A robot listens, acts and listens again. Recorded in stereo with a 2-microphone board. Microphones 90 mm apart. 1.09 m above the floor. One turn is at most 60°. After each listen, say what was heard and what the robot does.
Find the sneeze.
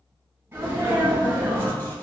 The sneeze: about 25° right or 155° right. Turn 25° right.
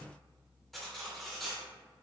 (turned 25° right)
Keep listening.
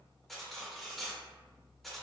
I heard a sneeze, but can't make it out now. It was about straight ahead or 130° right.